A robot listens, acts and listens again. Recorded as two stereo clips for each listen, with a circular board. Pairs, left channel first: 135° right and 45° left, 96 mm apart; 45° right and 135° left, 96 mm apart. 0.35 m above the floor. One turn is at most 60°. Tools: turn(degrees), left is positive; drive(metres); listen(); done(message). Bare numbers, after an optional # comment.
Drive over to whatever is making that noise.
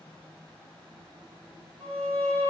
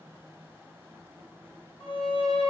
# The violin: 65° right.
turn(-60)
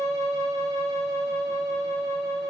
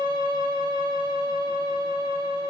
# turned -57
# The violin is now 10° right.
turn(-10)
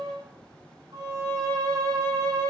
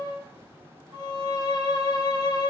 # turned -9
drive(1.0)
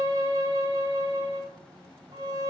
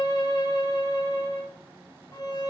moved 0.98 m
drive(1.0)
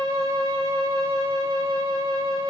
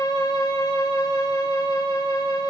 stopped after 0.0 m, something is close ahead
# The violin is now 10° left.
turn(10)
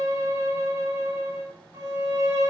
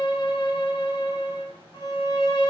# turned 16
done("I am next to the violin.")